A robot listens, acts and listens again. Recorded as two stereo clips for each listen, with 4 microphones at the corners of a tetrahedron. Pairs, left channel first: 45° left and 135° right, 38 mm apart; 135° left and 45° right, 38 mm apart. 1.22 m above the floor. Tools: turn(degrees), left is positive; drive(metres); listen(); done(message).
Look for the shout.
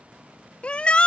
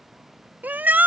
turn(degrees=-10)
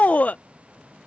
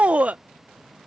done("Facing the shout.")